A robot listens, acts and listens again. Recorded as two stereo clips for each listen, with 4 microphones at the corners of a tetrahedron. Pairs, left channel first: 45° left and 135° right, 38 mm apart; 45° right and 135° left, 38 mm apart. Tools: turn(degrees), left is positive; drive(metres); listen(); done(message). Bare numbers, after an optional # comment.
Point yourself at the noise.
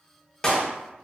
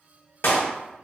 # The clap: 25° right.
turn(-25)
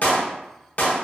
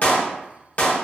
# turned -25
done("Found it: a clap, straight ahead, under 1 m away.")